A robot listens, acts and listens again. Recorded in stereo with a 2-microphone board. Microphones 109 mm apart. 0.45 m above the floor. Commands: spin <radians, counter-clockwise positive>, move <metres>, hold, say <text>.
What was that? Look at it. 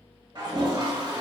spin -0.87
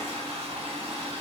spin -1.40
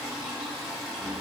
say Found it: a toilet flushing, straight ahead, 1 to 2 m away.